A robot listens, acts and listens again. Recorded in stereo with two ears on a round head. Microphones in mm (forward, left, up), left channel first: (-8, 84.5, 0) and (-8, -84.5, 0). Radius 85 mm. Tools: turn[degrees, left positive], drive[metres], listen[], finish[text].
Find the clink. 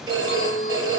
Thought: The clink: about 35° left or 145° left.
Action: turn[35]
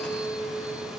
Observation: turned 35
Action: finish[Found it: a clink, straight ahead, 1 to 2 m away.]